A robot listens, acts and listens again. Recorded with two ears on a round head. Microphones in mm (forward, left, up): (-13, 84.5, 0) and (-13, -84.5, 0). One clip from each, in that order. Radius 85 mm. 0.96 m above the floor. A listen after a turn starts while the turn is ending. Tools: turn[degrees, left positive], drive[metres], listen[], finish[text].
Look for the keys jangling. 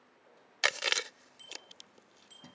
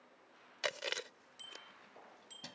Thought: The keys jangling: about 70° right or 110° right.
Action: turn[-70]
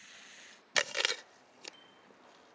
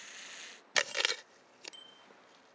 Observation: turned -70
Action: listen[]
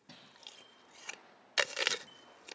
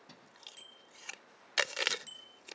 Action: finish[Facing the keys jangling.]